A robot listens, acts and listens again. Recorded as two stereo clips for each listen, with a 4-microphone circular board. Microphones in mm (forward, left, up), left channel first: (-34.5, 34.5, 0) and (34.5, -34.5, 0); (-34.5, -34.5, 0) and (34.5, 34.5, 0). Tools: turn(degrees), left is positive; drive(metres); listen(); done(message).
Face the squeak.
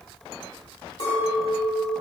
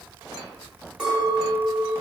listen()
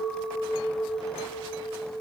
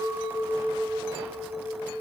listen()
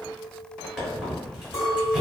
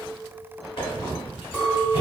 turn(degrees=-130)
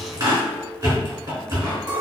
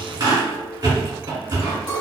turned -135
done("Facing the squeak, 1 to 2 m away.")